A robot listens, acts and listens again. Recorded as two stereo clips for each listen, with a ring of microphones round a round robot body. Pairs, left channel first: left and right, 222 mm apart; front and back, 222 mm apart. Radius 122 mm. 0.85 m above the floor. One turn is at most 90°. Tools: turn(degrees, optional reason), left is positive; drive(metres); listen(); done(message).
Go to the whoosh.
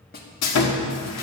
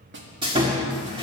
listen()
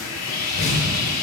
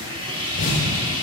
turn(degrees=60, reason="The whoosh: 60° left.")
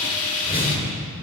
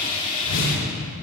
turn(degrees=25, reason="The whoosh is now 25° left.")
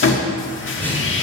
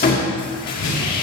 turn(degrees=10, reason="The whoosh is now 10° left.")
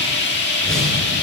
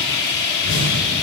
drive(metres=1.0)
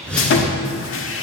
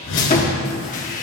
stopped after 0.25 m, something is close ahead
done("Blocked. The whoosh is further on, straight ahead.")